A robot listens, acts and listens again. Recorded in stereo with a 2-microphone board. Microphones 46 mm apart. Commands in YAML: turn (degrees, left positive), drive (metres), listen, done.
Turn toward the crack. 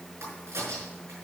turn: -70
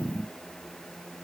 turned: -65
listen: true
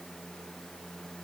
done: "I heard a crack, but can't make it out now. It was about 5° right or 45° right."